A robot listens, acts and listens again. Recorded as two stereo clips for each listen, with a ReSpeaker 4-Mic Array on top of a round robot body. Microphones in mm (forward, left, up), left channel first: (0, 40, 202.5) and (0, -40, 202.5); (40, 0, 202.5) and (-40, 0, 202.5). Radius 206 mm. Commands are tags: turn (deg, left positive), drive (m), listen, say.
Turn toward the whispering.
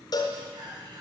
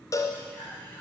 <turn deg="-65"/>
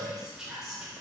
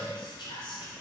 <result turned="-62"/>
<say>Found it: whispering, straight ahead, 2 to 4 m away.</say>